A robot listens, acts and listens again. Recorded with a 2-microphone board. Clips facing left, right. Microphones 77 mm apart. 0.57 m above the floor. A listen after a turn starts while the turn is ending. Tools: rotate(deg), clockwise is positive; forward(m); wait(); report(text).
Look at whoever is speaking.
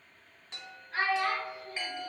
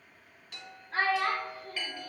rotate(45)
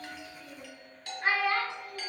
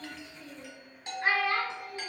report("Facing the child speaking.")